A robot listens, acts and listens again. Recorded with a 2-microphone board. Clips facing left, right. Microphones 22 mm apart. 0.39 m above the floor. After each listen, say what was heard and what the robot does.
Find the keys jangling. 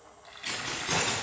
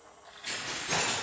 The keys jangling: about 70° left or 110° left. Turn 70° left.
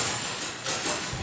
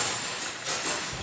So it is at 30° left. Turn 30° left.
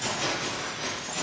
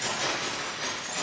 The keys jangling is now 10° right. Turn 10° right.
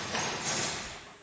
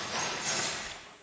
Facing the keys jangling.